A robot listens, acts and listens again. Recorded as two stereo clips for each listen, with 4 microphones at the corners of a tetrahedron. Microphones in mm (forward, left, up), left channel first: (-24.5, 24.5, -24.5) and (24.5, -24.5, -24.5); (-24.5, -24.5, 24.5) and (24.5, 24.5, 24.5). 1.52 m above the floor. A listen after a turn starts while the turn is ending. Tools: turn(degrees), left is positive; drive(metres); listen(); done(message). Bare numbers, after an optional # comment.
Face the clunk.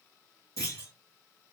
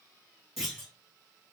# The clunk: 130° left.
turn(130)
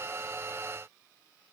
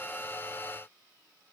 done("Facing where the clunk came from. I can't hear it now.")